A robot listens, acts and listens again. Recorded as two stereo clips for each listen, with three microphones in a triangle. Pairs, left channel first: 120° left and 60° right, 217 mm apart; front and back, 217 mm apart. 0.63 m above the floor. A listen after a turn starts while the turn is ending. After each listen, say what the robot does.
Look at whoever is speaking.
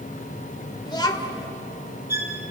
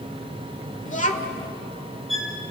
Turn 50° left.
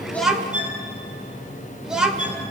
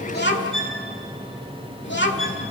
Turn 25° left.
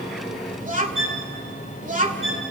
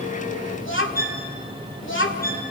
Turn 10° right.
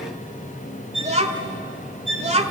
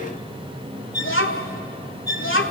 Found it: a child speaking, straight ahead.